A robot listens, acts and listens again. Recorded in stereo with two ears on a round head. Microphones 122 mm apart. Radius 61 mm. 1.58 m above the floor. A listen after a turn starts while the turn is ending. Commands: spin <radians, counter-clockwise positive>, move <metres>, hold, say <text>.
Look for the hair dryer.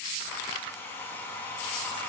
spin 0.26
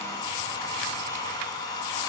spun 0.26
spin 2.62
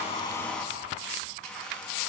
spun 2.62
spin 0.17
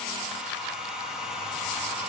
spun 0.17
say Found it: a hair dryer, straight ahead, 2 to 4 m away.